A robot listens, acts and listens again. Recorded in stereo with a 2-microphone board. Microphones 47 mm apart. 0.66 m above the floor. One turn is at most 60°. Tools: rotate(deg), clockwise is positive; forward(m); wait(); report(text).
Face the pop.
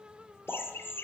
rotate(60)
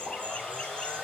wait()
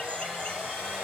report("I heard a pop, but can't make it out now. It was about 5° right or 55° right.")